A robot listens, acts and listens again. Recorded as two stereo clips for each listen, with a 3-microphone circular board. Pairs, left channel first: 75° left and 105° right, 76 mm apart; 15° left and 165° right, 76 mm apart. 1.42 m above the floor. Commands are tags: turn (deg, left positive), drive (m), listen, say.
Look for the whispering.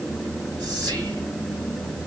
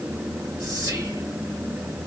<turn deg="-140"/>
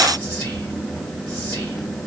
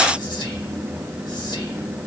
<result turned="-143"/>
<say>Facing the whispering.</say>